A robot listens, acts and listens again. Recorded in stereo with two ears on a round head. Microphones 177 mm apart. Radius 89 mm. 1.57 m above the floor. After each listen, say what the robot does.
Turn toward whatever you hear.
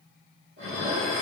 Turn 65° right.
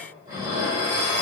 Turn 45° right.
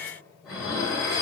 Facing the dishes clattering.